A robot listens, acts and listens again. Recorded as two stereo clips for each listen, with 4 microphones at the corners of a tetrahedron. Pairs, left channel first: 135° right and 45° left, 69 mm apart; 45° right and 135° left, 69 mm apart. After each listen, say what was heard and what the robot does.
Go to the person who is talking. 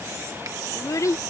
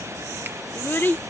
The child speaking: 100° right. Turn 100° right.
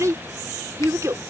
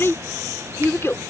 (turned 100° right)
Drive 1.0 m forward.
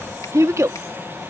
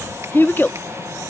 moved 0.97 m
The child speaking is now 10° left. Turn 10° left.
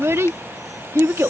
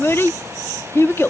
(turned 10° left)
Drive 1.0 m forward.
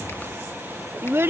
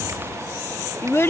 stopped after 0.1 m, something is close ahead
Arrived at the child speaking, straight ahead.